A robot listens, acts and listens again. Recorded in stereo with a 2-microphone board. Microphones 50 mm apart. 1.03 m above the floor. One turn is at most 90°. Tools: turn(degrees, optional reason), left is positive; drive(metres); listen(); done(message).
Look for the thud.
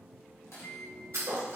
turn(degrees=-75, reason="The thud: about 75° right or 105° right.")
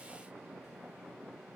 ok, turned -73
listen()
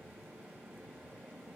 done("I heard a thud, but can't make it out now. It was about straight ahead or 30° right.")